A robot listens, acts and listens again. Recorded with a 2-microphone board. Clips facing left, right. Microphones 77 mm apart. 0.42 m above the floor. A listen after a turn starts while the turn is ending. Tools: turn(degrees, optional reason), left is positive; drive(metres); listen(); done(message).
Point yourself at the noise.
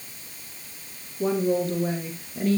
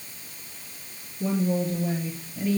turn(degrees=65, reason="The woman speaking: about 65° left or 115° left.")
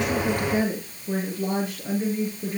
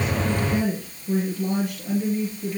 turn(degrees=35, reason="So it is at 35° left.")
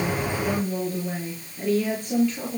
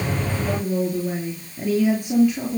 turn(degrees=-10, reason="The woman speaking is now 10° right.")
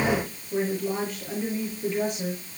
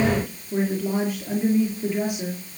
turn(degrees=-10, reason="The woman speaking is now 10° right.")
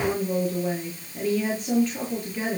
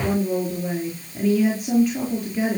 done("Found it: a woman speaking, straight ahead.")